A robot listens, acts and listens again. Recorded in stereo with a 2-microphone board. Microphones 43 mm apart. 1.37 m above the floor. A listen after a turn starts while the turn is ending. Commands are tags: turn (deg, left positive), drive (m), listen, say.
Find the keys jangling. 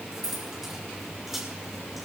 <turn deg="-30"/>
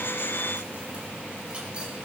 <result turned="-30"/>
<listen/>
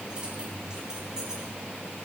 <turn deg="-20"/>
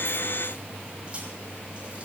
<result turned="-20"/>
<listen/>
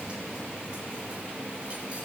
<listen/>
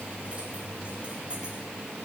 <say>I heard keys jangling, but can't make it out now. It was about straight ahead or 140° right.</say>